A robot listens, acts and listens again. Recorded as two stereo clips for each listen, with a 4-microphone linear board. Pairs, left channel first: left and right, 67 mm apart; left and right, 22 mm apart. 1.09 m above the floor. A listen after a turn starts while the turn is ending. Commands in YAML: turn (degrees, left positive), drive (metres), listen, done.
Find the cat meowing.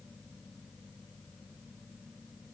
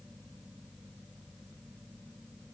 listen: true
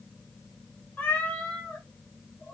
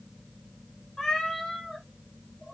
turn: 20
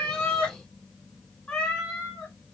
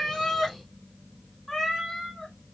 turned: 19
turn: 30
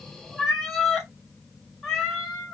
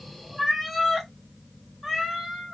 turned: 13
turn: 30
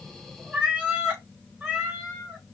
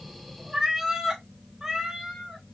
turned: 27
turn: -20
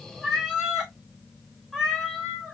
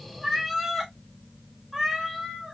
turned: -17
turn: -10
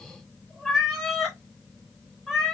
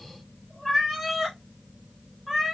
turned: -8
done: "Found it: a cat meowing, straight ahead."